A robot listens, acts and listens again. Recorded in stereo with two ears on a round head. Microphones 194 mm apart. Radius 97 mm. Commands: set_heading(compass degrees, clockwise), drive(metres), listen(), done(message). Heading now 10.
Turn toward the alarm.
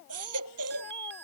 set_heading(65)
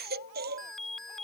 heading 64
done("Facing the alarm.")